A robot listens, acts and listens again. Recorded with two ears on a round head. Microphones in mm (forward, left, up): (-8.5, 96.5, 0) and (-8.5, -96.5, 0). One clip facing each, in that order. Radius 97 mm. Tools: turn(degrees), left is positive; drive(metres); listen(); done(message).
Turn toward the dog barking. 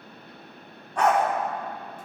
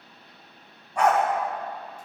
turn(degrees=-30)
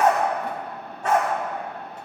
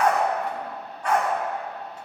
turn(degrees=25)
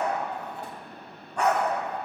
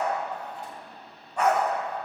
done("Found it: a dog barking, straight ahead.")